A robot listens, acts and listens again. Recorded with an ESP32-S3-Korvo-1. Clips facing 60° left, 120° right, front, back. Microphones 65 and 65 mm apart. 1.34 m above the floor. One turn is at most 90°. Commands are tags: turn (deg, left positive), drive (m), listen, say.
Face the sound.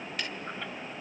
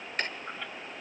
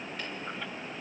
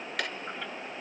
<turn deg="-90"/>
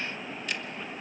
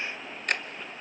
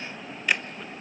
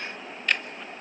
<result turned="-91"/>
<turn deg="-80"/>
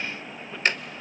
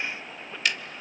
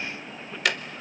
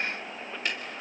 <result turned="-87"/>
<say>Found it: ticking, straight ahead.</say>